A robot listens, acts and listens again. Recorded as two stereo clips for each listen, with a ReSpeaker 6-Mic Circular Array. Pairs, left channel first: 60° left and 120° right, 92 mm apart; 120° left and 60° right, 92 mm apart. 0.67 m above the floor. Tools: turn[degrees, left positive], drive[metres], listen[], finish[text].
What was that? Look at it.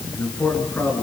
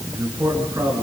Action: finish[Found it: a man speaking, straight ahead.]